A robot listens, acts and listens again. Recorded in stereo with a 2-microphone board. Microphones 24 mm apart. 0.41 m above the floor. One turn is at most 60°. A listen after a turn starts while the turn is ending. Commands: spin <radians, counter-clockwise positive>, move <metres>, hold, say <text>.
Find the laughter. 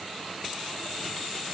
hold
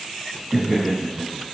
spin -0.52
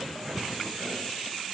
hold
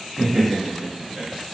spin -0.52
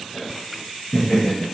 spin 0.52
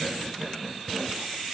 spin -0.44
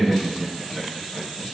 say Facing the laughter.